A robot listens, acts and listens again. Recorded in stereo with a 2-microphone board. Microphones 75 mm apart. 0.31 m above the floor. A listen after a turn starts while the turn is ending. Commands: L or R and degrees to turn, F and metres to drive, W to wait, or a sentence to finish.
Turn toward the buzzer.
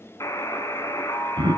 L45
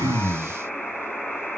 Found it: a buzzer, straight ahead.